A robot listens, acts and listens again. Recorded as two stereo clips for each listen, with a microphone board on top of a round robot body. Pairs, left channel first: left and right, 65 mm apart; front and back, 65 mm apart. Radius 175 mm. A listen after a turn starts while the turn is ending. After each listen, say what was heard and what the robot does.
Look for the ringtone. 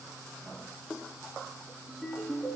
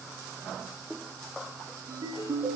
The ringtone: 170° right. Turn 170° right.
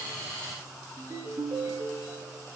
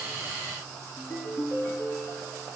The ringtone is now 50° right. Turn 50° right.
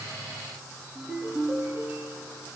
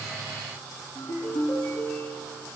The ringtone is now 15° right. Turn 15° right.
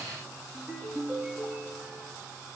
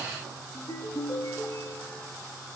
Facing the ringtone.